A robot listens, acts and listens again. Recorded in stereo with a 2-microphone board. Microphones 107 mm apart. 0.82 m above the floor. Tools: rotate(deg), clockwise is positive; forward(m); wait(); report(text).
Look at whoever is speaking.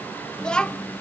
rotate(-30)
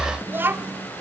rotate(20)
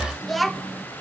report("Facing the child speaking.")